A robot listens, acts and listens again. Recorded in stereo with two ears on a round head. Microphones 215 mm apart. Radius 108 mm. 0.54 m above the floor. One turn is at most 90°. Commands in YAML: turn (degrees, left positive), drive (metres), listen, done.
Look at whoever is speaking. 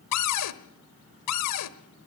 listen: true
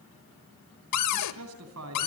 turn: -70
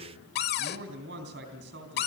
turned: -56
turn: -50
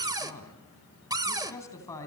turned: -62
turn: 15
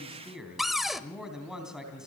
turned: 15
done: "Found it: a man speaking, straight ahead, 2 to 4 m away."